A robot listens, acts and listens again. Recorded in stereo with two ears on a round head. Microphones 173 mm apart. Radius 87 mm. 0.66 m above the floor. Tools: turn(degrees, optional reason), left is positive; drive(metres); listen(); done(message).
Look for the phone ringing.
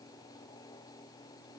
listen()
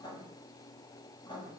listen()
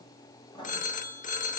turn(degrees=45, reason="The phone ringing: about 45° left or 135° left.")
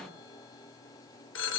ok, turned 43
turn(degrees=90, reason="So it is at 90° left.")
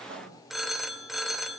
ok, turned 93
done("Facing the phone ringing, 1 to 2 m away.")